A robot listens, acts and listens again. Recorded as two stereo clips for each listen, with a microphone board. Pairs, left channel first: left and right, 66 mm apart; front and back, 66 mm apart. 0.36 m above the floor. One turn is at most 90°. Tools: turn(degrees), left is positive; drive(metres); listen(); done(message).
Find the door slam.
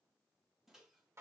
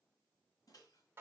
listen()
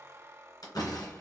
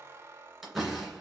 turn(degrees=90)
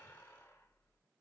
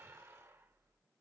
done("I heard a door slam from this way, but can't make it out now.")